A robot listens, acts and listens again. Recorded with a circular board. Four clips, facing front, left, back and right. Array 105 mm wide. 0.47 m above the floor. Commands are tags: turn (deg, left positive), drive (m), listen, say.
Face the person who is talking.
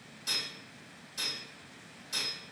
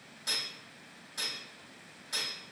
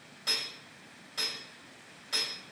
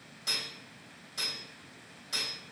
<listen/>
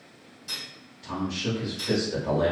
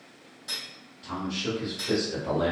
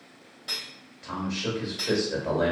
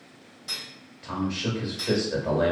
<turn deg="-130"/>
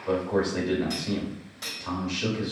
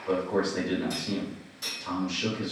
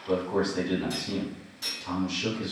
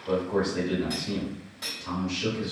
<say>Facing the man speaking, 1 to 2 m away.</say>